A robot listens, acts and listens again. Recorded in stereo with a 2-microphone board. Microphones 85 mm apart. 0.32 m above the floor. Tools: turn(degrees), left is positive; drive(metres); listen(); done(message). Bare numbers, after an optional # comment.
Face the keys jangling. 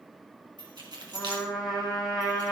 # The keys jangling: about 60° right or 120° right.
turn(-60)
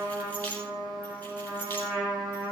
# So it is at 20° left.
turn(20)
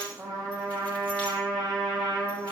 listen()
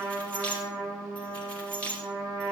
# The keys jangling is now 15° left.
turn(15)
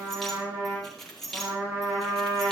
done("Found it: keys jangling, straight ahead, over 4 m away.")